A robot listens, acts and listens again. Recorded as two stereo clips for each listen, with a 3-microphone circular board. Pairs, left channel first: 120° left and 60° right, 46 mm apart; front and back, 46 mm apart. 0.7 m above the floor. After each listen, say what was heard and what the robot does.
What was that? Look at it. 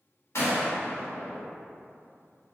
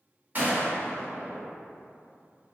The gunshot: 130° left. Turn 130° left.
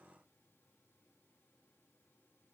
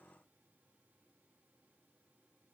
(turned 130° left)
Facing where the gunshot came from. I can't hear it now.